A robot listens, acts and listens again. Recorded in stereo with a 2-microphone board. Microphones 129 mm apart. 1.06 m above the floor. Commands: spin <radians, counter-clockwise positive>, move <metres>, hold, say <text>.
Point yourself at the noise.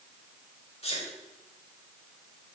spin 0.96
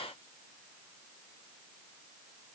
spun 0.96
hold
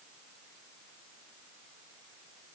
say I heard a sneeze, but can't make it out now. It was about straight ahead or 70° left.